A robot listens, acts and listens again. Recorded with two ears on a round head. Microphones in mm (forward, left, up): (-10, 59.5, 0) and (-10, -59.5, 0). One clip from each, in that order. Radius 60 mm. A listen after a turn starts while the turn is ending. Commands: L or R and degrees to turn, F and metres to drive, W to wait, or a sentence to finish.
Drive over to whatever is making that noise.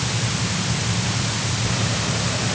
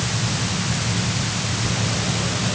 L25
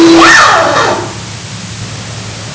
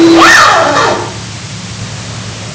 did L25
F1.0
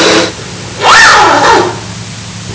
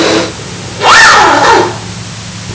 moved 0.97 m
F1.0
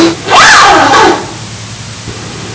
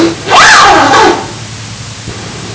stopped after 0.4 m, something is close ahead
Arrived at the zipper, straight ahead.